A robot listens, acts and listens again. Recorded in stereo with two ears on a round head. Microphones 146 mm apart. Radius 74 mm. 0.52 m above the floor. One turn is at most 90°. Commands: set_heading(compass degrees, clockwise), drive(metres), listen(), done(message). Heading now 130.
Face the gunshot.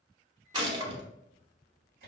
set_heading(160)
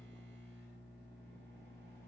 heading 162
listen()
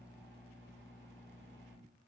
done("I heard a gunshot, but can't make it out now. It was about 5° left or 120° right.")